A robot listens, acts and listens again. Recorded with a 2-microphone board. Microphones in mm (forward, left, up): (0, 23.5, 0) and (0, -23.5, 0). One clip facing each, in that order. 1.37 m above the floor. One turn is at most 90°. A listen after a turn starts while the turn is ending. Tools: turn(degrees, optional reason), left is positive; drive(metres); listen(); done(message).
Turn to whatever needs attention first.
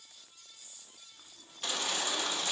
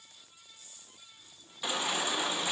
turn(degrees=-30)
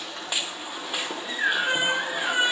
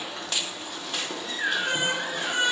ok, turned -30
turn(degrees=15, reason="So it is at 15° left.")
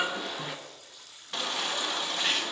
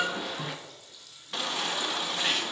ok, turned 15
done("Found it: a baby crying, straight ahead.")